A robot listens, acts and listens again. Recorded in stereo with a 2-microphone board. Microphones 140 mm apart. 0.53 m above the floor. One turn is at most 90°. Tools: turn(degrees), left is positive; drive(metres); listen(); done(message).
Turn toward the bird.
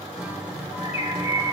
turn(degrees=50)
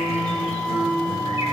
listen()
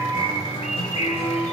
turn(degrees=65)
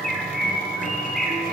done("Facing the bird, 1 to 2 m away.")